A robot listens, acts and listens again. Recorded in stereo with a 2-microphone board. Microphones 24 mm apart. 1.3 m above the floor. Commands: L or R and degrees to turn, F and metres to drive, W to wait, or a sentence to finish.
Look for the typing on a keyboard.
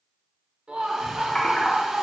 L35
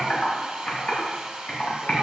L115
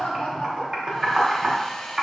R25
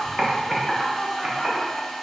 R20
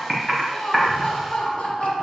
Found it: typing on a keyboard, straight ahead, 1 to 2 m away.